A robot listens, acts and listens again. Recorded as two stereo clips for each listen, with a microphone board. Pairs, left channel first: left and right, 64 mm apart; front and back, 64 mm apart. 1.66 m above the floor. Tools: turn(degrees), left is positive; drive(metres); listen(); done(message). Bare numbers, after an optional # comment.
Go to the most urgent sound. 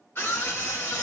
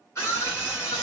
# The scream: 45° left.
turn(45)
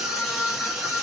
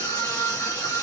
drive(1.0)
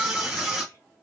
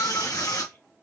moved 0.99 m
# The scream is now 10° right.
turn(-10)
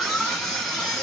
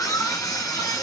drive(1.0)
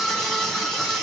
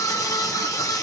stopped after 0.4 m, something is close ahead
done("Arrived at the scream, straight ahead.")